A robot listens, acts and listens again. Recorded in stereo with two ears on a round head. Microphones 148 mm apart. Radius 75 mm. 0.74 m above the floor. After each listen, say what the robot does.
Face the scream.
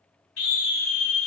Turn 65° left.
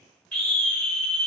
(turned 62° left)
Facing the scream, 2 to 4 m away.